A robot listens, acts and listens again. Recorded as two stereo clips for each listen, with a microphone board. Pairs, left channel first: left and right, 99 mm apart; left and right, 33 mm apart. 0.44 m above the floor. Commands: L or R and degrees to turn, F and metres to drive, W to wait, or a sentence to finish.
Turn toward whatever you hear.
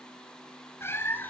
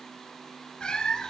L20
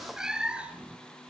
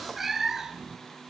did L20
R15
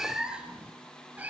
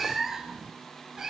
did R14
R15
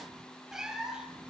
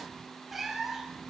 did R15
Found it: a cat meowing, straight ahead, 2 to 4 m away.